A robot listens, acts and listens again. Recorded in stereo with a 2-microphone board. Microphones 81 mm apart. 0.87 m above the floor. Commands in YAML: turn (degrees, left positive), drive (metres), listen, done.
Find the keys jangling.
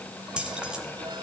turn: -30
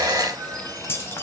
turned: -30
turn: 30
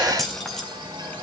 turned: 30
done: "Facing the keys jangling, 2 to 4 m away."